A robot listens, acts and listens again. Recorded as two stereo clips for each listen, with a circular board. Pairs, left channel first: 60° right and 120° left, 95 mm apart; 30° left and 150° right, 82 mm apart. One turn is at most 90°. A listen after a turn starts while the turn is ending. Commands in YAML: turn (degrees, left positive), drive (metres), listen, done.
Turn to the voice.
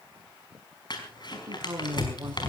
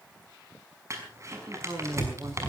turn: 90
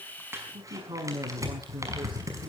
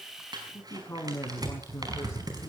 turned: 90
turn: 85
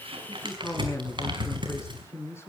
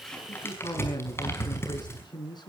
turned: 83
done: "Facing the man speaking, over 4 m away."